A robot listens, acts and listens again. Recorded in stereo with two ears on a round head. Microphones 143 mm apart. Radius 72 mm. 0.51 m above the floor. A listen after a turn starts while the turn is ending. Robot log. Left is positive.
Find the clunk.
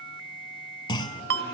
note: The clunk: about 30° left or 150° left.
cmd yaw +30
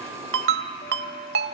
cmd idle
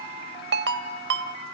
end: I heard a clunk, but can't make it out now. It was about straight ahead or 120° left.